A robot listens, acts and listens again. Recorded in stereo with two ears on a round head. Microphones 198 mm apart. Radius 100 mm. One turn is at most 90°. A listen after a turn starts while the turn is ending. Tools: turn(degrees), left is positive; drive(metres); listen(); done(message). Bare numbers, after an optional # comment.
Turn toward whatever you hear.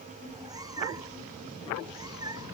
# The cat meowing: about 20° right or 160° right.
turn(-20)
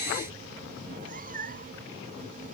# So it is at 140° right.
turn(-90)
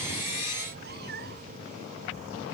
# The cat meowing is now 45° right.
turn(-45)
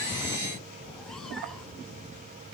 listen()
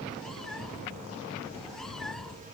done("Found it: a cat meowing, straight ahead.")